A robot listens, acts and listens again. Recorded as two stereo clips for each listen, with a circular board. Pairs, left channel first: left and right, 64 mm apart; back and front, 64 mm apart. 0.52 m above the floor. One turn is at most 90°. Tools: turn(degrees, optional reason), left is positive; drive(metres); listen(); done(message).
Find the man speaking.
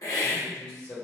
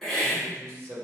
turn(degrees=30, reason="The man speaking: 30° left.")
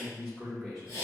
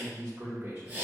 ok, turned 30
done("Facing the man speaking, 1 to 2 m away.")